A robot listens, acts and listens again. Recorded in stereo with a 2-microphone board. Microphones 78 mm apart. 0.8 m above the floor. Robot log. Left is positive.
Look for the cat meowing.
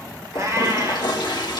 note: The cat meowing: about 45° right or 135° right.
cmd yaw -45
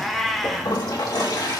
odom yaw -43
end: Found it: a cat meowing, straight ahead.